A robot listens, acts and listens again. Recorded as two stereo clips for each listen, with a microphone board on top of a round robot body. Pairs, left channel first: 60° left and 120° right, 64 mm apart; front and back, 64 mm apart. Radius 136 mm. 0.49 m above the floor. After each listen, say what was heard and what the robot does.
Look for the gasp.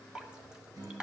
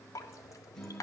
Keep listening.
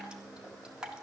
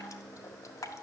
Keep listening.
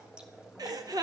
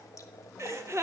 The gasp: 135° right. Turn 135° right.
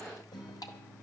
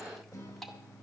Facing where the gasp came from. I can't hear it now.